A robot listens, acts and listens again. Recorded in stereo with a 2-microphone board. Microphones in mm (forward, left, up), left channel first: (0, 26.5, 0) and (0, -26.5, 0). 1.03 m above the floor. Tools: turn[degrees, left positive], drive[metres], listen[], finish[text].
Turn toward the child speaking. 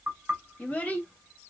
Thought: The child speaking: about 25° left or 155° left.
Action: turn[25]
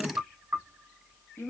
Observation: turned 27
Thought: So it is at 130° left.
Action: turn[130]
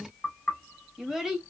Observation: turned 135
Action: finish[Facing the child speaking.]